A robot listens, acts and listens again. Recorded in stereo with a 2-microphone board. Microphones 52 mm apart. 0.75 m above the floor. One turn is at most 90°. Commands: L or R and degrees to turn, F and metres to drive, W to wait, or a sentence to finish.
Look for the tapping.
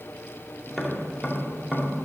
R30
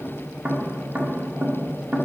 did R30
R90
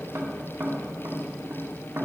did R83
R60
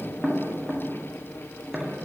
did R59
Found it: tapping, straight ahead, 1 to 2 m away.